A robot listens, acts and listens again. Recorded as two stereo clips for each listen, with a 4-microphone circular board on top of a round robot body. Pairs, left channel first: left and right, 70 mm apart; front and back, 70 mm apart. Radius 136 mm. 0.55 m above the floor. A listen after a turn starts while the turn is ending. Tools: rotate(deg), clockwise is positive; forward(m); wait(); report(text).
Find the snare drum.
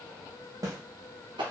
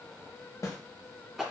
rotate(45)
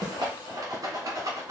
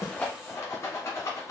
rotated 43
wait()
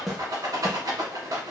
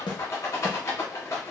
report("Facing the snare drum, under 1 m away.")